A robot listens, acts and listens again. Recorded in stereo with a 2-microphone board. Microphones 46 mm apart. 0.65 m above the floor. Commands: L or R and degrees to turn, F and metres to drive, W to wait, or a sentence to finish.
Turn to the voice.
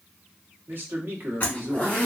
R55
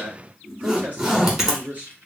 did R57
R45
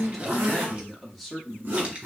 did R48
Facing the man speaking.